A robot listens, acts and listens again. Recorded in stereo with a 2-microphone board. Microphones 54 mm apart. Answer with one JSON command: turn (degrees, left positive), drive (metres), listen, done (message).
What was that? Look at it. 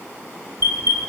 {"turn": -60}
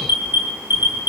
{"turn": -50}
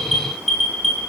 {"done": "Found it: an alarm, straight ahead."}